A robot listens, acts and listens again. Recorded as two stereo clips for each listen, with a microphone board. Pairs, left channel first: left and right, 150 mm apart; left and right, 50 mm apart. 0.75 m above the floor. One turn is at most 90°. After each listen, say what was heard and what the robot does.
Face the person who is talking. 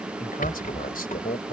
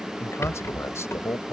The man speaking: about 70° left or 110° left. Turn 70° left.
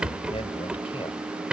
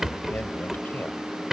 So it is at 40° left. Turn 40° left.
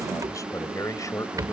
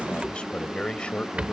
The man speaking is now 20° left. Turn 20° left.
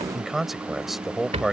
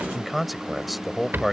Facing the man speaking.